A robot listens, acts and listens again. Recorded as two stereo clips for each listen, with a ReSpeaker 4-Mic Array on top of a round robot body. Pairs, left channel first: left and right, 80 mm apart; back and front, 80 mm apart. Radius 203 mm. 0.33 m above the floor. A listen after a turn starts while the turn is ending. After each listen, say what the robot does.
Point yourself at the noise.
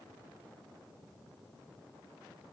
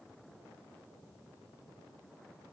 Keep listening.
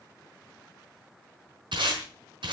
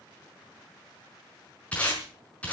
Turn 105° right.
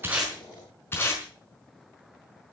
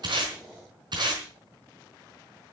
Turn 30° left.
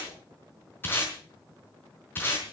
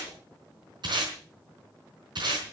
Turn 25° left.
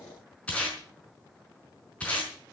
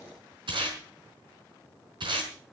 Turn 15° left.
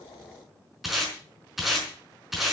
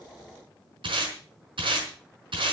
Facing the tape being pulled, over 4 m away.